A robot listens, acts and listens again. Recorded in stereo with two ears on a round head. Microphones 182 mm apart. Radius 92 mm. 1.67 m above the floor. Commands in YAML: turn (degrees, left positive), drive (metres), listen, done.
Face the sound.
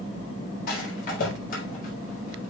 turn: 50
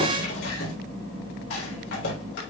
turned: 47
turn: 80
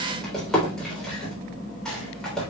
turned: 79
done: "Found it: a rattle, straight ahead."